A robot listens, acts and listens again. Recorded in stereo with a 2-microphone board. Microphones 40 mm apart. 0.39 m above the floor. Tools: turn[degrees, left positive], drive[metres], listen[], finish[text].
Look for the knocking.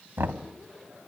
Thought: The knocking: about 65° right or 115° right.
Action: turn[-65]
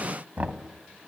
Thought: So it is at 40° right.
Action: turn[-40]
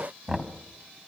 Thought: The knocking is now 10° right.
Action: turn[-10]
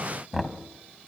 Action: finish[Facing the knocking, 1 to 2 m away.]